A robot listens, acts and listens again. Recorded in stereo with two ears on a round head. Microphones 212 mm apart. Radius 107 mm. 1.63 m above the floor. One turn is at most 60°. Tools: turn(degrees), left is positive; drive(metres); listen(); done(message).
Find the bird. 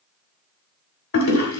listen()
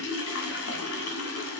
listen()
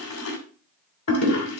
done("I can't make out a bird, only a toilet flushing.")